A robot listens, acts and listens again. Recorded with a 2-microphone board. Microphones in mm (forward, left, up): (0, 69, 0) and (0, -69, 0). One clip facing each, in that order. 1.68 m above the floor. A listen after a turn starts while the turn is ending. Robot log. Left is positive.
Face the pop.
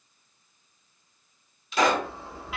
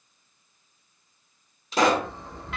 note: The pop: about 40° right or 140° right.
cmd yaw -40
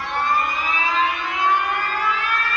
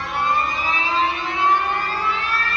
cmd idle
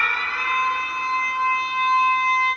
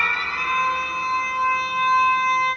end: I heard a pop, but can't make it out now. It was about straight ahead or 100° right.